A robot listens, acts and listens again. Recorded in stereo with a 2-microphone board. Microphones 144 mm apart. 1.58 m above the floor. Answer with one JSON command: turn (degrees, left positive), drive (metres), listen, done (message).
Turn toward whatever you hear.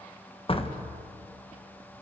{"turn": 40}
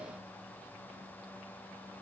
{"listen": true}
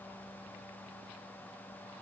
{"done": "I heard a door slam, but can't make it out now. It was about straight ahead or 100° left."}